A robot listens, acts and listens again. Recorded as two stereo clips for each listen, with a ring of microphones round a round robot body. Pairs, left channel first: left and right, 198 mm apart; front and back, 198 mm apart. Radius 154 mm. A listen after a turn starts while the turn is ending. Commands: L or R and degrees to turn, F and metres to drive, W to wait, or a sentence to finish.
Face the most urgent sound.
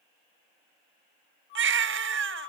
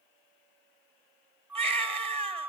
R115
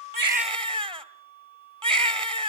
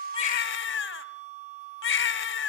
R25
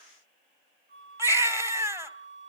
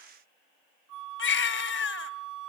R15
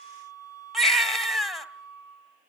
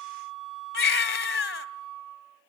Found it: a baby crying, straight ahead, 2 to 4 m away.